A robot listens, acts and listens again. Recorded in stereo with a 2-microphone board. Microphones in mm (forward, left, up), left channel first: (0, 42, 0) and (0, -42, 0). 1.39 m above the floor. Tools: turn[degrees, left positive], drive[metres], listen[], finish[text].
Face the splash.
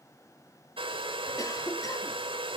Action: listen[]
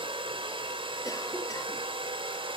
Action: listen[]
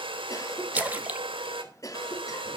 Thought: The splash: about 20° right or 160° right.
Action: turn[-20]
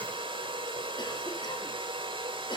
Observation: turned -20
Action: listen[]
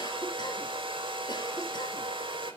Action: finish[I heard a splash, but can't make it out now. It was about straight ahead or 140° right.]